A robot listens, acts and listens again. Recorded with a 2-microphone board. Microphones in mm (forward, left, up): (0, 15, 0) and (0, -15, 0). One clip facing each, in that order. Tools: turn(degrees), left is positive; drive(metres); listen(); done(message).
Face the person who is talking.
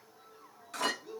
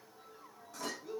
turn(degrees=30)
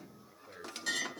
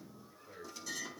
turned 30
turn(degrees=140)
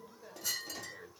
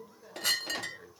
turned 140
turn(degrees=10)
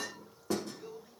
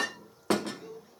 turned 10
done("Found it: a man speaking, straight ahead.")